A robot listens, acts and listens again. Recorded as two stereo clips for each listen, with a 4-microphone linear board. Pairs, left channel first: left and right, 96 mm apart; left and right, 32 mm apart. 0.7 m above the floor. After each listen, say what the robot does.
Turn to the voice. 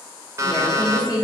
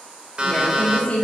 Turn 40° left.
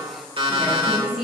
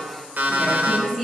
Facing the woman speaking, 2 to 4 m away.